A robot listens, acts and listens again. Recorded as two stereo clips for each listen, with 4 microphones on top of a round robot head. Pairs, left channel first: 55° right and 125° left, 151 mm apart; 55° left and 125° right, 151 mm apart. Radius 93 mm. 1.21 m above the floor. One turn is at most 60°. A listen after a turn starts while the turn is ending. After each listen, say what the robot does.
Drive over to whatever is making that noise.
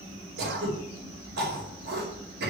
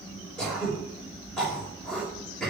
Turn 60° left.
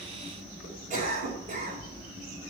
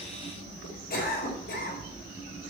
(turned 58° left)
Turn 60° left.
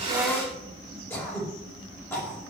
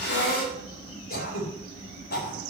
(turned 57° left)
Turn 25° left.
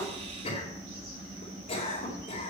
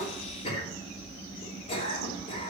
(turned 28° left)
Drive 1.0 m forward.
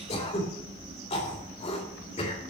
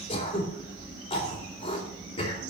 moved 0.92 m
Drive 1.0 m forward.
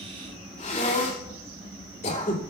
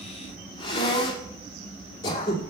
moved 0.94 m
Turn 10° right.
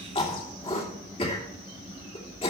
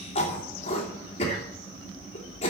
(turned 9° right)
Drive 1.0 m forward.
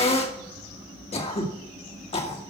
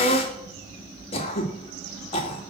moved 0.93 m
Drive 1.0 m forward.
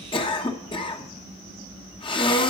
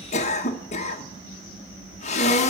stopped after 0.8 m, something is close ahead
Arrived at the throat clearing, straight ahead.